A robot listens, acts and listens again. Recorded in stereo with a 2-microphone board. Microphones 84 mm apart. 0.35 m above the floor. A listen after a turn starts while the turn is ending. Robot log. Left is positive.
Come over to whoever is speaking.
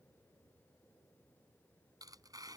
cmd idle
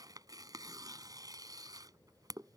cmd idle
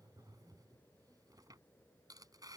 end: I can't make out anyone speaking to turn to.